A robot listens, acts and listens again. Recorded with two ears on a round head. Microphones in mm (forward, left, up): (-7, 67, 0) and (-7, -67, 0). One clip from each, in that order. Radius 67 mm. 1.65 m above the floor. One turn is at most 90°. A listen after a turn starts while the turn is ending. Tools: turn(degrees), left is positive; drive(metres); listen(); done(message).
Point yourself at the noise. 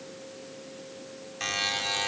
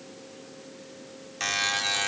turn(degrees=-30)
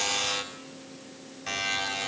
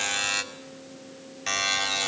turn(degrees=-90)
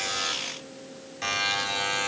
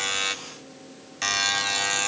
turn(degrees=-60)
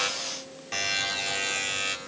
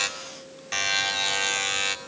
turn(degrees=-30)
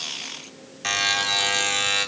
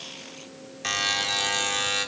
done("Found it: a buzzer, straight ahead, 2 to 4 m away.")